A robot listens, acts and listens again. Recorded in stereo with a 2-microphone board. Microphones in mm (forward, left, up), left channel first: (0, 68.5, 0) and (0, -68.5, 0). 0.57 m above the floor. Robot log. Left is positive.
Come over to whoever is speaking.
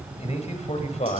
note: The man speaking: about 50° left or 130° left.
cmd yaw +50
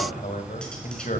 note: So it is at 75° left.
cmd yaw +75
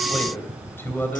note: The man speaking is now 15° left.
cmd yaw +15
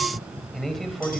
cmd fwd 1.0
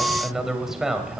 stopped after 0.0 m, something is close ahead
end: Something is in my way. I am facing the man speaking but have not reached it.